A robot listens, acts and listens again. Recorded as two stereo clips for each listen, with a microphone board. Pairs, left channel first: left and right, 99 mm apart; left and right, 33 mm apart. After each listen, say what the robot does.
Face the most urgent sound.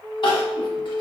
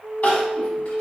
Turn 55° left.
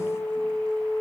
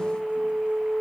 Keep listening.
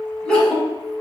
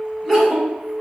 Turn 10° left.
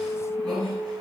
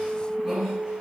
Keep listening.
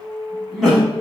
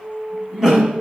Found it: crying, straight ahead.